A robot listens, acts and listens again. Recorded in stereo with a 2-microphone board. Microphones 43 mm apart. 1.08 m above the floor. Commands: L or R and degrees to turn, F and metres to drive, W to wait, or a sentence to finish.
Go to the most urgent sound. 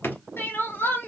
L70
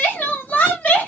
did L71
L35
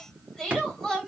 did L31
F1.0
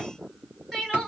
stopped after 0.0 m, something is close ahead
Blocked. The crying is further on, straight ahead.